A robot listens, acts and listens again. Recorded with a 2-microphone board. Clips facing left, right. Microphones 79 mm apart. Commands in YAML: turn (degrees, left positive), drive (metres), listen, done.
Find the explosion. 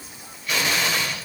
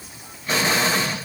turn: -35
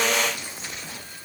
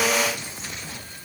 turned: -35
listen: true
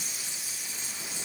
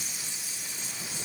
done: "I heard an explosion, but can't make it out now. It was about straight ahead or 110° right."